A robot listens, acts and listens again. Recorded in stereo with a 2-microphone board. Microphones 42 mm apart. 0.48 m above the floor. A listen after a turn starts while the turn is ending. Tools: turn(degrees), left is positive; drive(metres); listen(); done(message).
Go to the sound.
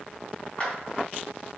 turn(degrees=25)
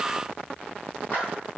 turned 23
listen()
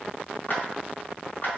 turn(degrees=130)
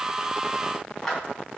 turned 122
turn(degrees=10)
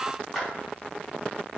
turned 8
drive(metres=1.0)
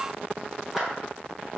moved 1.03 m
listen()
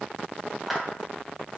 drive(metres=1.0)
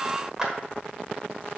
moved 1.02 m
turn(degrees=-20)
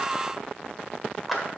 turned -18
drive(metres=1.0)
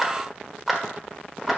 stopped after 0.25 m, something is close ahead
done("Arrived at the clap, straight ahead.")